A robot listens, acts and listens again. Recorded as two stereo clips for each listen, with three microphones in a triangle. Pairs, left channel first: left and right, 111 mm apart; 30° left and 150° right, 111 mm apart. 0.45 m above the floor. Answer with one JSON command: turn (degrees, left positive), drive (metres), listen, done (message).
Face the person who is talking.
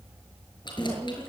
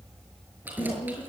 {"done": "Found it: a woman speaking, straight ahead."}